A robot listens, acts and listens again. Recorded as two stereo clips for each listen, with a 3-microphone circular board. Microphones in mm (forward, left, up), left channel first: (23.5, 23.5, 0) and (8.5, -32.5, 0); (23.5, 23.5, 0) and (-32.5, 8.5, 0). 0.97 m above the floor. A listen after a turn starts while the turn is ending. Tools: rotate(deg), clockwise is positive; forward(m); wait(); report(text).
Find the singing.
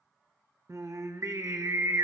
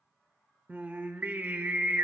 rotate(110)
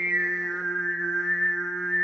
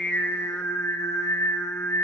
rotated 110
report("Found it: singing, straight ahead, under 1 m away.")